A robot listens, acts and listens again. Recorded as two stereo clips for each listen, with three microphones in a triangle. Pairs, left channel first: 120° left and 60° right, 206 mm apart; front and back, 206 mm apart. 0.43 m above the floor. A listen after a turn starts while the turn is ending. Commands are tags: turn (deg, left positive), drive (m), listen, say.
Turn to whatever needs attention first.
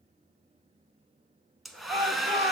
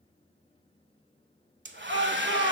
<turn deg="120"/>
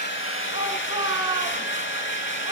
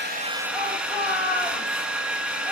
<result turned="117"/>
<say>Found it: a shout, straight ahead.</say>